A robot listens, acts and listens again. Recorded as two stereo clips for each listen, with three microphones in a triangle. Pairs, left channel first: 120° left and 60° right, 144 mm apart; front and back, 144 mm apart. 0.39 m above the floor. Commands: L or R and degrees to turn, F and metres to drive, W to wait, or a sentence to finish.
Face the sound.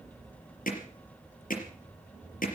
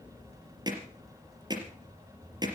L120
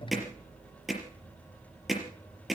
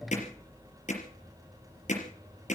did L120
L30
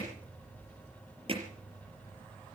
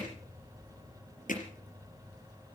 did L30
R15
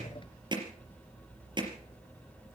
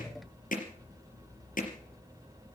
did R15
Found it: hammering, straight ahead.